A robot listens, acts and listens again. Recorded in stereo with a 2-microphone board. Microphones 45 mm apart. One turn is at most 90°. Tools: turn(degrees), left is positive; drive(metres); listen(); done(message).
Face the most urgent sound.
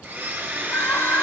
turn(degrees=60)
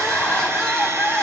turn(degrees=10)
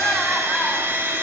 done("Found it: crying, straight ahead.")